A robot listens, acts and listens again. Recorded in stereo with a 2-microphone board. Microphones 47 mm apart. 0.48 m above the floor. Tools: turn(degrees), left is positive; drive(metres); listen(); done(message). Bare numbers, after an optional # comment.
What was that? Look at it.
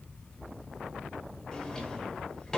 # The drawer: about 15° left or 165° left.
turn(15)
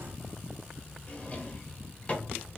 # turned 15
# So it is at 150° left.
turn(150)
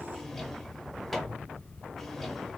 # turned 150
done("Facing the drawer.")